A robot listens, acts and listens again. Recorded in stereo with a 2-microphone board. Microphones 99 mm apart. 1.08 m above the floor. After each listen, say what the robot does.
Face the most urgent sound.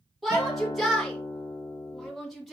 Turn 30° left.
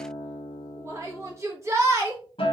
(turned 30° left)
Turn 30° right.
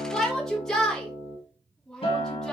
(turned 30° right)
Found it: a shout, straight ahead.